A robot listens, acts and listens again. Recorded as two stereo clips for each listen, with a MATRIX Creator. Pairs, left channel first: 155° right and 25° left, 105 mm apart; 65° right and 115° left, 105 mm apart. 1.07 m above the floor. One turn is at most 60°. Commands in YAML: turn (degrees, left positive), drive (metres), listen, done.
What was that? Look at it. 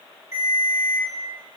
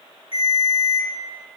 turn: -40
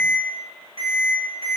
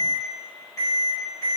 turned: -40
done: "Found it: a ringtone, straight ahead."